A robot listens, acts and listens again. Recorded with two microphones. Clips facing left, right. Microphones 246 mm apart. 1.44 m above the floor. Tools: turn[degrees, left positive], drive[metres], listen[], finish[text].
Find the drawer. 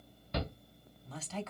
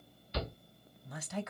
Action: listen[]
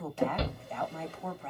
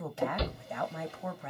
Thought: The drawer: about 60° left or 120° left.
Action: turn[60]
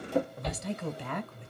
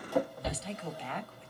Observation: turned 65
Thought: So it is at 30° left.
Action: turn[30]
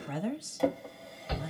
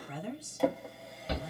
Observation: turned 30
Action: finish[Facing the drawer, 1 to 2 m away.]